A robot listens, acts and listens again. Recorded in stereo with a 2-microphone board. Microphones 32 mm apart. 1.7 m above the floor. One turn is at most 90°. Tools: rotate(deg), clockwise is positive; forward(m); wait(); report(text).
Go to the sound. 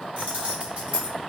rotate(40)
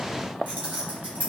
rotate(90)
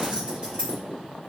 rotate(35)
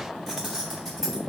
forward(1.0)
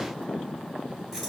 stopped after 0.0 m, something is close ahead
report("Blocked. The keys jangling is further on, straight ahead.")